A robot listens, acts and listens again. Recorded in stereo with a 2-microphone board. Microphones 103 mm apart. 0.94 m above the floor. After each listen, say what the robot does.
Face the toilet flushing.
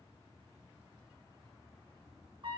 Keep listening.
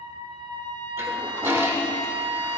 Turn 25° right.
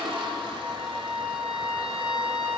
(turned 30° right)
Turn 125° right.
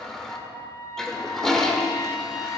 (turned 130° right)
Facing the toilet flushing, 1 to 2 m away.